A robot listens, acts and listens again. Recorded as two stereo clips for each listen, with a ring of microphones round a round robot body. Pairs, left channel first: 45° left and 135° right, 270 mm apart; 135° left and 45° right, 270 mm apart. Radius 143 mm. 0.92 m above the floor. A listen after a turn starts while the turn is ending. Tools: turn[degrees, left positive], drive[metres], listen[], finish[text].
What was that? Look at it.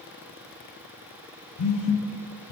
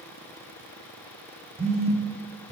Thought: The phone buzzing: 25° left.
Action: turn[25]
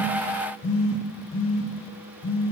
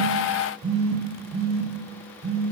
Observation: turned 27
Action: finish[Found it: a phone buzzing, straight ahead, under 1 m away.]